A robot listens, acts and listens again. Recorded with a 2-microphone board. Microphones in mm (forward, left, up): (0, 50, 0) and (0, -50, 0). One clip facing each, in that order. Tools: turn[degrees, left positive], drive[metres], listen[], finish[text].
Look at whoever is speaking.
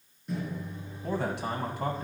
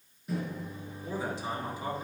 Thought: The man speaking: about 65° left or 115° left.
Action: turn[65]
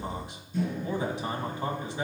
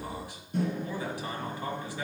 Thought: So it is at 25° left.
Action: turn[25]
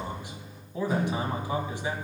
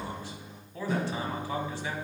Thought: The man speaking is now 20° left.
Action: turn[20]
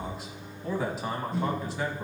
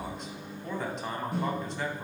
Action: finish[Found it: a man speaking, straight ahead.]